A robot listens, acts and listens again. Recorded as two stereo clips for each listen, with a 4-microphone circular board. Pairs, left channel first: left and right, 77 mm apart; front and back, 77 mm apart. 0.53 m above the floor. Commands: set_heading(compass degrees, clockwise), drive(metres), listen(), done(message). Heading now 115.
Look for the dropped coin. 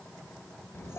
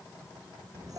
listen()
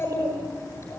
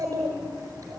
listen()
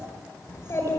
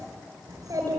done("I can't make out a dropped coin, only a child speaking.")